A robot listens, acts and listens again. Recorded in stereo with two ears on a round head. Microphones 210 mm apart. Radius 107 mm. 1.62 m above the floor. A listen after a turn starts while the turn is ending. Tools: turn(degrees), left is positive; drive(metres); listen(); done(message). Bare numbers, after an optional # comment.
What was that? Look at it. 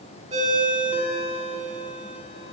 # The ringtone: about 25° right or 155° right.
turn(-25)
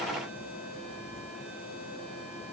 listen()
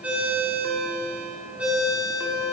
done("Found it: a ringtone, straight ahead.")